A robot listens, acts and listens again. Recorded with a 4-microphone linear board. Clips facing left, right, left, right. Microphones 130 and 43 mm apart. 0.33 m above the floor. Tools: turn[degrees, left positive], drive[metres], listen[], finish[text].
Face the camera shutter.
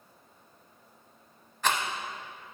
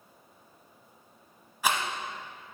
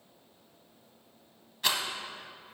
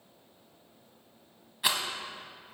Action: listen[]
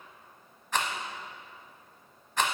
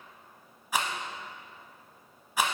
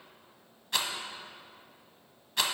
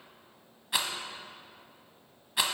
Action: listen[]
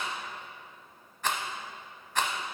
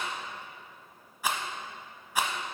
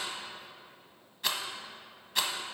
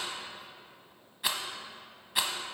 Action: finish[I can't make out a camera shutter, only a rattle.]